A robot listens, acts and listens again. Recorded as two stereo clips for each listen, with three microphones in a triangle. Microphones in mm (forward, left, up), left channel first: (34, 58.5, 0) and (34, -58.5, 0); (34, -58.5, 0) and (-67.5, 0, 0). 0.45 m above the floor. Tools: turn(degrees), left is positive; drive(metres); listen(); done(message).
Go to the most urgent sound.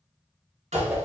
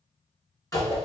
listen()
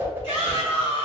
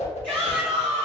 turn(degrees=50)
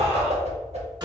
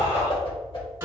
listen()
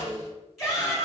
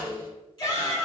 drive(metres=1.0)
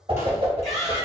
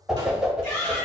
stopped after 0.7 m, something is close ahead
done("I am next to the shout.")